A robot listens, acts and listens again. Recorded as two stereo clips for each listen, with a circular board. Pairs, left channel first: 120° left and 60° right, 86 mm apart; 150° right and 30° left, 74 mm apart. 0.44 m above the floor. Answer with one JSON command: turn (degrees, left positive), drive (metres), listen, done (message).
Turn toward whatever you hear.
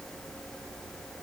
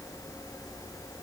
{"listen": true}
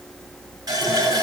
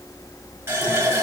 {"turn": -20}
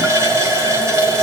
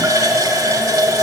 {"turn": -10}
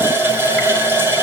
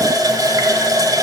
{"done": "Found it: a running tap, straight ahead."}